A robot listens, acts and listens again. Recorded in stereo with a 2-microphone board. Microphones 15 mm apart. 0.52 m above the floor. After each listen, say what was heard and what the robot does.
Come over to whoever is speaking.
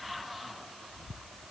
Keep listening.
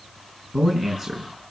The man speaking: about 30° right or 150° right. Turn 30° right.
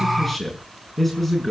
Drive 1.0 m forward.
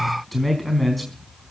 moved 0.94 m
Drive 1.0 m forward.
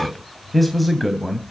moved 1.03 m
Drive 1.0 m forward.
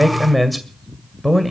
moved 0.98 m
Drive 1.0 m forward.
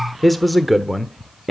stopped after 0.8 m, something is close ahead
Arrived at the man speaking, straight ahead.